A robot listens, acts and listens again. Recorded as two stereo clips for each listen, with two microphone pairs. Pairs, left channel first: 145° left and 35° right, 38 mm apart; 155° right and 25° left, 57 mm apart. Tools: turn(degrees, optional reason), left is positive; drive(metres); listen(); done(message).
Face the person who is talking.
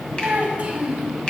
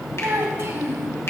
turn(degrees=15, reason="The child speaking: 15° left.")
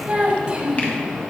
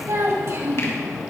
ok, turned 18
turn(degrees=20, reason="The child speaking is now 20° left.")
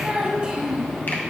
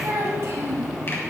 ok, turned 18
turn(degrees=25, reason="The child speaking is now 25° left.")
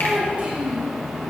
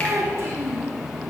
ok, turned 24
turn(degrees=15, reason="The child speaking is now 15° left.")
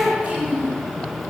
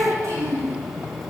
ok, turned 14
turn(degrees=10, reason="The child speaking is now 10° left.")
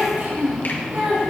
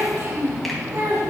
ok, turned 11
done("Found it: a child speaking, straight ahead.")